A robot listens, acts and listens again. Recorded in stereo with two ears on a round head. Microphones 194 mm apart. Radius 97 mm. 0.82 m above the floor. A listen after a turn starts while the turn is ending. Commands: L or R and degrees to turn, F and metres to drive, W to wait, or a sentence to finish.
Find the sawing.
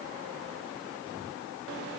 W
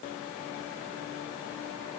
W
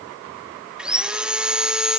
R30
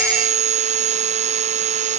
R145
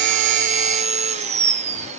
R35
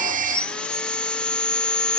Facing the sawing.